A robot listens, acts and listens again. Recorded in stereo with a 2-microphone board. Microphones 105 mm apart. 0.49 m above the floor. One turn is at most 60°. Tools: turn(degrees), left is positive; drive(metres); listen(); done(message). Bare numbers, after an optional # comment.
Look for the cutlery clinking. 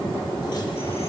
listen()
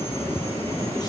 listen()
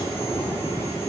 done("I can't make out cutlery clinking to turn to.")